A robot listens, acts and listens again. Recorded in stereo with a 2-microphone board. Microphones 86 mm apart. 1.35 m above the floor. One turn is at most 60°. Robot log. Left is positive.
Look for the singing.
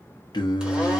note: The singing: about 55° left or 125° left.
cmd yaw +55
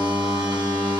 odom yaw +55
cmd idle
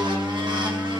end: Found it: singing, straight ahead.